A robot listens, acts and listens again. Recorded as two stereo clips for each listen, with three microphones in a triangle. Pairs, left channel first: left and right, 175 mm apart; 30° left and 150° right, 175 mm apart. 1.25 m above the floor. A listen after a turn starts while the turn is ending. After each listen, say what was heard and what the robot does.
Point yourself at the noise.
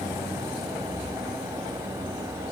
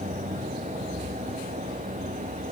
Keep listening.
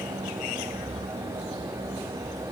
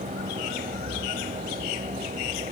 Keep listening.
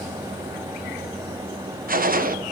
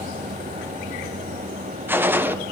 The gunshot: 75° right. Turn 75° right.
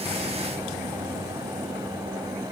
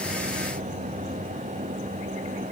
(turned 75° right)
Facing where the gunshot came from. I can't hear it now.